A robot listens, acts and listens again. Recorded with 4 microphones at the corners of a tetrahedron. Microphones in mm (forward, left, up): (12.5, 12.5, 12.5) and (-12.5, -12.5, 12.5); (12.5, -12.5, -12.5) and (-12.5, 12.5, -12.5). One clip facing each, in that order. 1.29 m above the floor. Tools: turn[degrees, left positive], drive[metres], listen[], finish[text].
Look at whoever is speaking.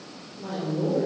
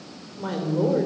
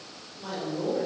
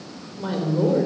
Thought: The woman speaking: 165° right.
Action: turn[-165]
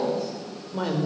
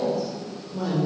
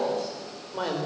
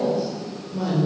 Action: finish[Found it: a woman speaking, straight ahead.]